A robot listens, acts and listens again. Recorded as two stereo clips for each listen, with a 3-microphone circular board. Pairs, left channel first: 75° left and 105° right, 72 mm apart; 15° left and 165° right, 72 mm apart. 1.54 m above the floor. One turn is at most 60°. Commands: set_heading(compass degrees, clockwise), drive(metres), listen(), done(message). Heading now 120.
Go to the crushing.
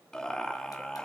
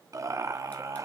listen()
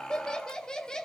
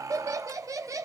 listen()
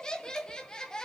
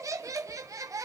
done("I can't make out crushing to turn to.")